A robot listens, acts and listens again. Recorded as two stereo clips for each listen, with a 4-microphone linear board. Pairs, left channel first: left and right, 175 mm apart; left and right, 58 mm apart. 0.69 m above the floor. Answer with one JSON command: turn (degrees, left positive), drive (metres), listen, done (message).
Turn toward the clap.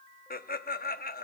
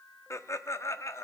{"listen": true}
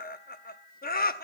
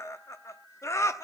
{"listen": true}
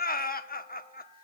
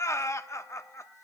{"done": "I can't make out a clap, only laughter."}